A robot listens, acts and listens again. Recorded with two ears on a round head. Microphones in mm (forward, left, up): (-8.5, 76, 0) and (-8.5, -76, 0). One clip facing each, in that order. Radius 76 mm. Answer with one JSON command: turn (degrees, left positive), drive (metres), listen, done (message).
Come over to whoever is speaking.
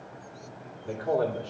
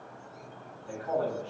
{"turn": 65}
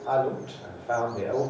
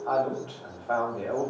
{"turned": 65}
{"turn": 15}
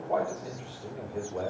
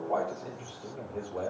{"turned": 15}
{"drive": 1.0}
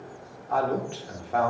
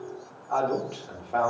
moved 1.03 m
{"drive": 1.0}
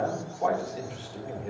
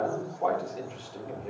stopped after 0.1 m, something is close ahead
{"done": "Arrived at the man speaking, straight ahead."}